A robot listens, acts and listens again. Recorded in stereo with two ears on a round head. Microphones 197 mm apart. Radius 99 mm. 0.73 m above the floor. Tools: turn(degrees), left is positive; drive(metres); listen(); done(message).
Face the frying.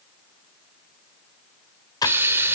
turn(degrees=-30)
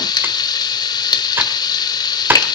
turn(degrees=20)
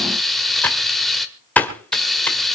done("Facing the frying, 1 to 2 m away.")